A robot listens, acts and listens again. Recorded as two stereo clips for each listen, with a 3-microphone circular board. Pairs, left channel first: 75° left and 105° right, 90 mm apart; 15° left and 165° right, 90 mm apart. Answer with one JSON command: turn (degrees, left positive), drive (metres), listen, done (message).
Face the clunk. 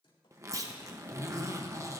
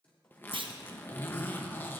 {"turn": -155}
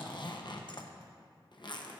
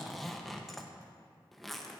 {"done": "Facing where the clunk came from. I can't hear it now."}